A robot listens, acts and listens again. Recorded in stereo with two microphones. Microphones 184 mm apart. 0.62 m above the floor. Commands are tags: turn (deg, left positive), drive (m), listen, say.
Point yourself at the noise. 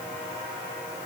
<listen/>
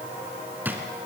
<turn deg="-30"/>
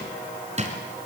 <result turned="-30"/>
<turn deg="-145"/>
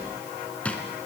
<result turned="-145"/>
<say>Found it: a drawer, straight ahead.</say>